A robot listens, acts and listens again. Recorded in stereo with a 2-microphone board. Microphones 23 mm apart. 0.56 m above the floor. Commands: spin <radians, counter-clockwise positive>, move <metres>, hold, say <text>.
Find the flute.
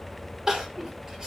hold
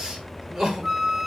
spin -0.44
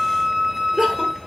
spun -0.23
spin -2.44
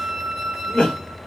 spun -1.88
spin -0.61
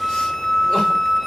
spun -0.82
spin 0.26
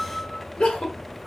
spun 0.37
spin -0.17
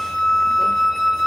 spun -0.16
say Facing the flute, 1 to 2 m away.